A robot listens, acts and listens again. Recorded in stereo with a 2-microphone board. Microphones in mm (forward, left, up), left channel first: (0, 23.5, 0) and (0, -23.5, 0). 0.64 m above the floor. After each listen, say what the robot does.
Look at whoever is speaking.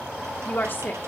Turn 40° left.
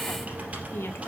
Keep listening.
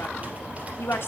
Turn 85° left.
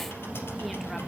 Keep listening.
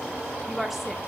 Found it: a woman speaking, straight ahead, 1 to 2 m away.